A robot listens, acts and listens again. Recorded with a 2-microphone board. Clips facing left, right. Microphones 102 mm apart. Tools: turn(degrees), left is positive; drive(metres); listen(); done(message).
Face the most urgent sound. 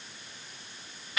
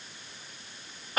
listen()
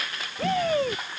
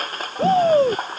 turn(degrees=-35)
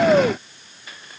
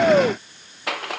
done("Facing the shout.")